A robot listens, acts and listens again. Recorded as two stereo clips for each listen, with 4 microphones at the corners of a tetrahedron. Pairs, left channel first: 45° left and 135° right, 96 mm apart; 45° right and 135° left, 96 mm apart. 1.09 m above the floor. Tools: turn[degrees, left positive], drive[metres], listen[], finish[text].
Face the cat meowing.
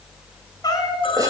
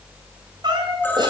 Thought: The cat meowing: 95° left.
Action: turn[95]
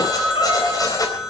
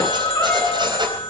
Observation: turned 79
Thought: Nothing new. It was at 15° left.
Action: turn[15]
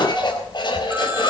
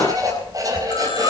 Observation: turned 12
Action: listen[]
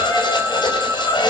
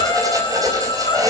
Action: finish[Facing where the cat meowing came from. I can't hear it now.]